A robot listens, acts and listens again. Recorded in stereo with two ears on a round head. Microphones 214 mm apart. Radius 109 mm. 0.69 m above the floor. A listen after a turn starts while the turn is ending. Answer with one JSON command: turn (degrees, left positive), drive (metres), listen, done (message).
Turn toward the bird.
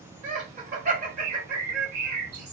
{"turn": -90}
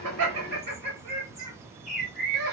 {"done": "Facing the bird."}